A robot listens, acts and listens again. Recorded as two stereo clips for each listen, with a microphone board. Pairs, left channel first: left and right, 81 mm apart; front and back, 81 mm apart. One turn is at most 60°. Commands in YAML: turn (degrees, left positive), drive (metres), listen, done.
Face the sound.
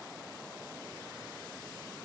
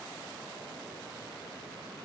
listen: true
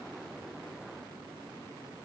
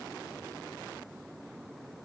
listen: true
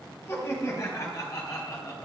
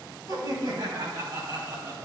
turn: 60
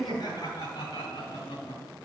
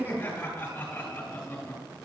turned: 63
turn: 60
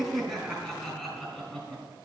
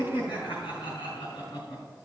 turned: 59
done: "Found it: laughter, straight ahead, over 4 m away."